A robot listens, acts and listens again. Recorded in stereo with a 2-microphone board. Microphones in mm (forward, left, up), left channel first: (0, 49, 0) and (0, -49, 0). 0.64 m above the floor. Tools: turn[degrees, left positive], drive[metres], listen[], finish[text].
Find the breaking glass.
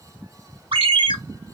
Action: listen[]
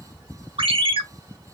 Action: listen[]
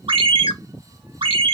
Action: finish[I can't make out breaking glass, only a ringtone.]